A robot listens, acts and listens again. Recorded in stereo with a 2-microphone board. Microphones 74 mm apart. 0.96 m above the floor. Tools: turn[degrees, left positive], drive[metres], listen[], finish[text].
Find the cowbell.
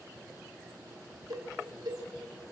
Thought: The cowbell: about 65° right or 115° right.
Action: turn[-65]
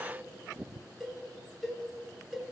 Action: finish[Found it: a cowbell, straight ahead.]